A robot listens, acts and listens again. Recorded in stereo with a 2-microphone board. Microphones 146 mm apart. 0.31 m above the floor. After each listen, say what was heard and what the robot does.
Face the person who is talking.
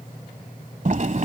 Keep listening.
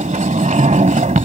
Keep listening.
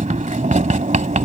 I can't make out anyone speaking, only a sliding door.